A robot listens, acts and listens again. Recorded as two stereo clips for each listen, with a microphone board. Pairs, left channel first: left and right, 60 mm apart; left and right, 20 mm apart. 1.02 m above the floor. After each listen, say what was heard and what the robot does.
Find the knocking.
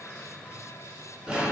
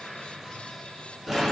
Keep listening.
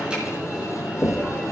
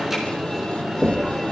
The knocking: about 30° left or 150° left. Turn 30° left.
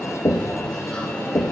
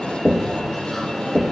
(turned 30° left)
So it is at 120° left. Turn 120° left.
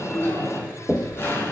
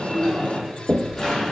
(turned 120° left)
Found it: knocking, straight ahead, 1 to 2 m away.